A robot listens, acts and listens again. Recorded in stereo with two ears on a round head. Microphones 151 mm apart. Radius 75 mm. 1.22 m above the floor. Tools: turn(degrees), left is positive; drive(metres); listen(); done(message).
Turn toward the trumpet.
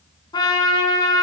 turn(degrees=25)
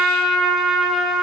done("Found it: a trumpet, straight ahead.")